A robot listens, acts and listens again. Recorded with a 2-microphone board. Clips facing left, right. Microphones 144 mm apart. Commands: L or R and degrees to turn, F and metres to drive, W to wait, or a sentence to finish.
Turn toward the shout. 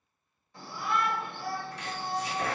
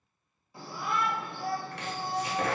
R30
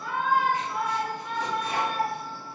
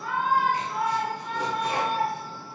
R140
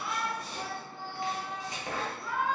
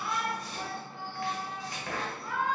R40
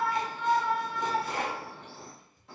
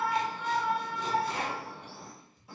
R10
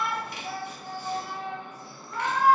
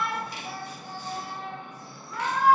Facing the shout, 1 to 2 m away.